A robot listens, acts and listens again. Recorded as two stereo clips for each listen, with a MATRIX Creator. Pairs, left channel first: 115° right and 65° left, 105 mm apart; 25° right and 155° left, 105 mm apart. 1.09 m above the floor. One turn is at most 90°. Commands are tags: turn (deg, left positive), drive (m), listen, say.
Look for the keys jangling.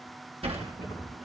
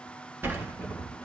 <turn deg="-90"/>
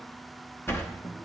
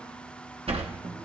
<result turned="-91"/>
<turn deg="-45"/>
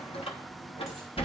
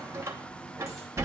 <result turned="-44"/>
<listen/>
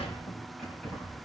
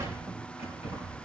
<turn deg="-25"/>
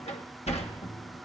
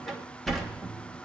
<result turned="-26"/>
<listen/>
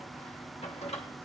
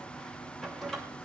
<listen/>
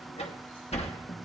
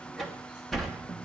<say>Facing where the keys jangling came from. I can't hear it now.</say>